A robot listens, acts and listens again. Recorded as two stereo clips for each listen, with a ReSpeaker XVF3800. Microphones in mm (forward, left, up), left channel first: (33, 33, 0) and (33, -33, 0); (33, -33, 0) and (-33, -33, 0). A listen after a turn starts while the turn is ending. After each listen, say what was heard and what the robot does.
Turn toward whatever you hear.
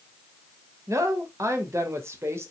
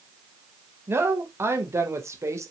The woman speaking: 140° right. Turn 140° right.
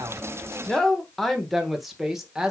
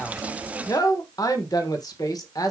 The woman speaking is now 10° right. Turn 10° right.
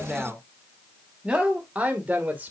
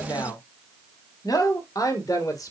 The woman speaking is now 25° right. Turn 25° right.
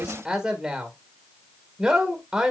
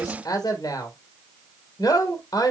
The woman speaking is now 10° right. Turn 10° right.
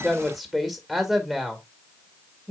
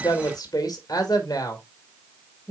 Facing the woman speaking.